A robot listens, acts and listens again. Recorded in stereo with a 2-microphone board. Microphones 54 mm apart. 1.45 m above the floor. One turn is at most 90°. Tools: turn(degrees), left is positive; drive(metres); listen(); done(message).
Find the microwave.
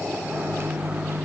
turn(degrees=-50)
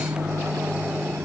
turn(degrees=-80)
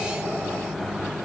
done("Facing the microwave.")